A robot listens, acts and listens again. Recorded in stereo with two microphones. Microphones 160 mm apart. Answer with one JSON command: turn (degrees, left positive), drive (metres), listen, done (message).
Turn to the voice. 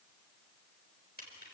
{"listen": true}
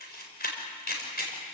{"listen": true}
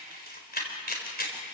{"done": "I can't make out anyone speaking to turn to."}